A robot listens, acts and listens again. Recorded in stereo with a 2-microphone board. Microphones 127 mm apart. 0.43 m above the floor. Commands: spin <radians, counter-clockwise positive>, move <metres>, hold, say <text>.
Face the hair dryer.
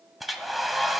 spin 0.52
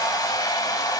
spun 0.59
spin 2.62
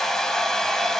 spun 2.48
say Found it: a hair dryer, straight ahead, 1 to 2 m away.